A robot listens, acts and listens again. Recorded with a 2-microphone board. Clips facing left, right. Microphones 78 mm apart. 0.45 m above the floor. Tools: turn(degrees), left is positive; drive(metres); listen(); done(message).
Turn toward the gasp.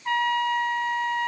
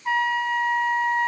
listen()
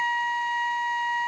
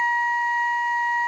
listen()
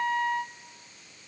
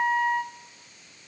done("I can't make out a gasp, only a trumpet.")